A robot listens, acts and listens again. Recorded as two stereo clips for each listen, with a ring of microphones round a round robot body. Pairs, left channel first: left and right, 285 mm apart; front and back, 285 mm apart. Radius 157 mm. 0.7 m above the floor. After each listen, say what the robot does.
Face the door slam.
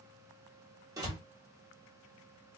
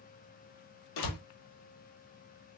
Turn 10° right.
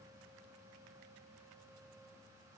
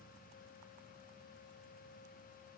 Facing where the door slam came from. I can't hear it now.